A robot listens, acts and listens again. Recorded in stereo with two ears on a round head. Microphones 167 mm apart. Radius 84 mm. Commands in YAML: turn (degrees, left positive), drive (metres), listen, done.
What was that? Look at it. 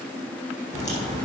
turn: 20
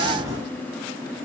done: "Found it: a crack, straight ahead, over 4 m away."